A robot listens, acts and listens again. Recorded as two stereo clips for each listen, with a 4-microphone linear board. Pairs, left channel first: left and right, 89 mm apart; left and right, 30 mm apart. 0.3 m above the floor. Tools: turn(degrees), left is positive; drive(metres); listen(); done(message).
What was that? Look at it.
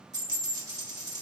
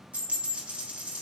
turn(degrees=-45)
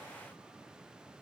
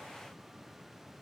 listen()
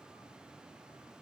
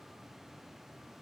done("I heard a dropped coin, but can't make it out now. It was about straight ahead or 90° right.")